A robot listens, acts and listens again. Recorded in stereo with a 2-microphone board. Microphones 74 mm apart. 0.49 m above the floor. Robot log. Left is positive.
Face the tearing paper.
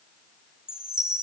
cmd idle
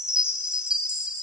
cmd idle
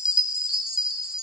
end: I can't make out tearing paper, only a chime.